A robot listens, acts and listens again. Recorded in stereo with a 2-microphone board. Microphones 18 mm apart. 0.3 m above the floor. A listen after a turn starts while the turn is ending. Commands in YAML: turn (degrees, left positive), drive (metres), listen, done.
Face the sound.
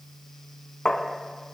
turn: 55
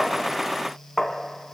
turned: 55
turn: 10
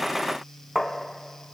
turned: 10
done: "Found it: tapping, straight ahead."